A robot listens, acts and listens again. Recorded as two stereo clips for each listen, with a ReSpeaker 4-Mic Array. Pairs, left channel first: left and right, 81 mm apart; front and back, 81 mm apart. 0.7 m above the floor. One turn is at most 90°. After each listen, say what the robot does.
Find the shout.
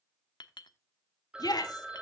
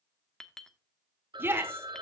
Turn 90° left.
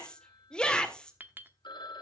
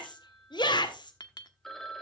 Turn 10° left.
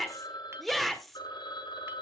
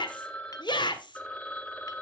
Facing the shout.